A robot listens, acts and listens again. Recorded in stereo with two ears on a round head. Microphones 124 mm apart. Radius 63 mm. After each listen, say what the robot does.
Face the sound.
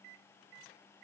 Keep listening.
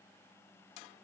Keep listening.
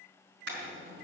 Turn 90° right.
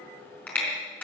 Turn 10° left.
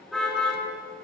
Found it: a car horn, straight ahead.